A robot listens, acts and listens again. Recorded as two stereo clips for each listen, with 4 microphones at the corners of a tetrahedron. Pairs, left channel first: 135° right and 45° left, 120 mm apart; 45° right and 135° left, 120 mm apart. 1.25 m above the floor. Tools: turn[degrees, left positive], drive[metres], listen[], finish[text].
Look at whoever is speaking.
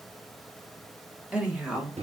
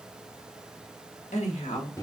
Thought: The woman speaking: 35° right.
Action: turn[-35]
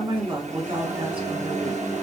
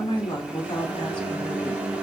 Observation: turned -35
Action: finish[Found it: a woman speaking, straight ahead.]